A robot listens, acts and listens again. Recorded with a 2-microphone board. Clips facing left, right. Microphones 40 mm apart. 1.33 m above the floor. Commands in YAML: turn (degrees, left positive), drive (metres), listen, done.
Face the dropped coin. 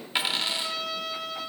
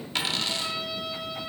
turn: 15
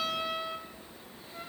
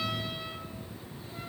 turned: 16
listen: true
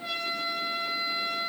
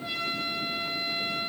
done: "I heard a dropped coin, but can't make it out now. It was about straight ahead or 145° left."